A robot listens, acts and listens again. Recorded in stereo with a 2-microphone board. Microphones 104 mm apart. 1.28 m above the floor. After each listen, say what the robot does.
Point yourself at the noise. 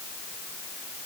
Keep listening.
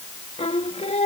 Turn 90° left.
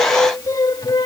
Turn 45° left.
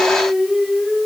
Facing the singing.